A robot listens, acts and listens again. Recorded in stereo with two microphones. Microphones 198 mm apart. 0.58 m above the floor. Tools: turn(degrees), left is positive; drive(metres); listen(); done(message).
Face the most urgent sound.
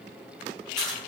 listen()
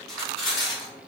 listen()
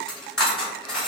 done("I can't make out anything urgent, only cutlery clinking.")